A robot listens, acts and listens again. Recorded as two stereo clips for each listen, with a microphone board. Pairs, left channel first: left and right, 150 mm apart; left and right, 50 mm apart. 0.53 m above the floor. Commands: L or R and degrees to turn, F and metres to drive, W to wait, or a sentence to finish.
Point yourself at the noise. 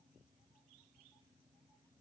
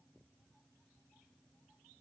W
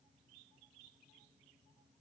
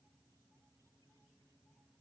W
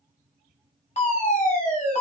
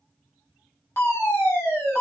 L50
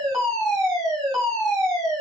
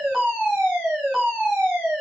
Found it: a fire alarm, straight ahead.